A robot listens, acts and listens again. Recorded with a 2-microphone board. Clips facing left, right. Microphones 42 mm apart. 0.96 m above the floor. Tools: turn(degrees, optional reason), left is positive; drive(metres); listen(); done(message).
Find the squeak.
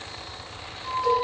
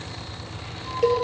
turn(degrees=20, reason="The squeak: about 20° left or 160° left.")
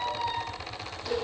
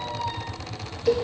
done("Facing the squeak, 2 to 4 m away.")